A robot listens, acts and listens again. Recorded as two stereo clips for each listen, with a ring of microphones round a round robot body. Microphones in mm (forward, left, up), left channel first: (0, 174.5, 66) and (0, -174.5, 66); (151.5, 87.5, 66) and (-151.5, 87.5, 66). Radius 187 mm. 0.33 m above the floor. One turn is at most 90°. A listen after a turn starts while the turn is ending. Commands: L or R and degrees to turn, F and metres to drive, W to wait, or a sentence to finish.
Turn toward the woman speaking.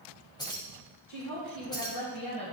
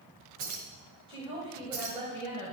L90
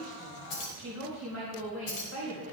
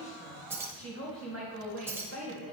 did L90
L40
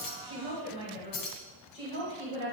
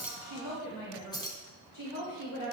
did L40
L20
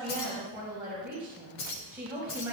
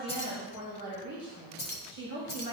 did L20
Found it: a woman speaking, straight ahead.